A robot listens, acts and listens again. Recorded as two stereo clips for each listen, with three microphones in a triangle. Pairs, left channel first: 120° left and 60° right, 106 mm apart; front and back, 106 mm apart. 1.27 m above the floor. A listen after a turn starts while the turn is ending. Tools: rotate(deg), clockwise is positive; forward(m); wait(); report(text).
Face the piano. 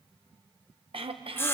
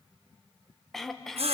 wait()
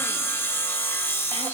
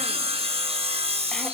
wait()
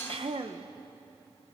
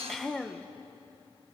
report("I can't make out a piano to turn to.")